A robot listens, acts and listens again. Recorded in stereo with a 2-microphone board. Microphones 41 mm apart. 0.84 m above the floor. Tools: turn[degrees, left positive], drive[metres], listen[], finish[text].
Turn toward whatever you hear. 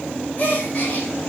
Thought: The gasp: about 35° left or 145° left.
Action: turn[35]
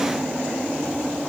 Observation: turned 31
Action: listen[]
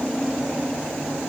Action: finish[I heard a gasp, but can't make it out now. It was about 5° left or 115° left.]